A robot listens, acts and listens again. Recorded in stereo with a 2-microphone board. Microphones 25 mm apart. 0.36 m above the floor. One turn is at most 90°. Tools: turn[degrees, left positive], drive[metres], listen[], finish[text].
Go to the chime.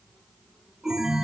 Thought: The chime: about 30° right or 150° right.
Action: turn[-30]
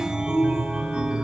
Thought: So it is at 120° right.
Action: turn[-90]
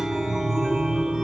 Thought: The chime is now 30° right.
Action: turn[-30]
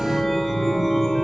Action: drive[1.0]
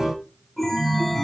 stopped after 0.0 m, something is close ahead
Action: finish[Something is in my way. I am facing the chime but have not reached it.]